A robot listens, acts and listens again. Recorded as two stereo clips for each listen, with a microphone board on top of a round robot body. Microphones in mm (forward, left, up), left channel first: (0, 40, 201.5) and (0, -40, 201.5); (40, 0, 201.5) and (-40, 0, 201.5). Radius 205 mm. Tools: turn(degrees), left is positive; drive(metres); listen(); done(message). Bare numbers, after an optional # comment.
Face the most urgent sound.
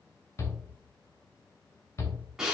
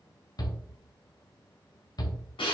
# The shout: 35° left.
turn(35)
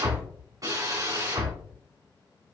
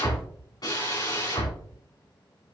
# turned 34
done("Found it: a shout, straight ahead.")